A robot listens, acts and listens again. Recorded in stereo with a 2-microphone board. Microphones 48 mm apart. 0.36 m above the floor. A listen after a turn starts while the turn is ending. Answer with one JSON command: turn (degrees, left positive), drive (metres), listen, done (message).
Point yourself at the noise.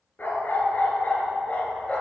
{"turn": 25}
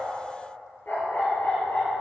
{"turn": 40}
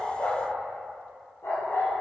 {"turn": 110}
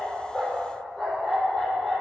{"turn": 10}
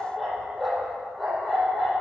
{"done": "Found it: a dog barking, straight ahead, over 4 m away."}